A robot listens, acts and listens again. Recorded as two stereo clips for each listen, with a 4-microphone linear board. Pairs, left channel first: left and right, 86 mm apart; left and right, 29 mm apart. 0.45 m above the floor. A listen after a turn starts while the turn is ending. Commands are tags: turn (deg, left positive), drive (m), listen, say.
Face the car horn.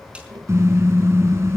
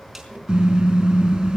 <turn deg="-30"/>
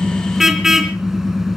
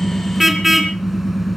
<say>Found it: a car horn, straight ahead, 2 to 4 m away.</say>